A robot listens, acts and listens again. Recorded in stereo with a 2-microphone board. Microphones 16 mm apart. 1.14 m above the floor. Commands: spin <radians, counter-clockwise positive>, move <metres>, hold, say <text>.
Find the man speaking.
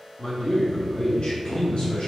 spin 1.13
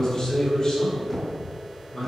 spin 0.79
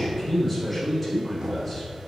say Facing the man speaking.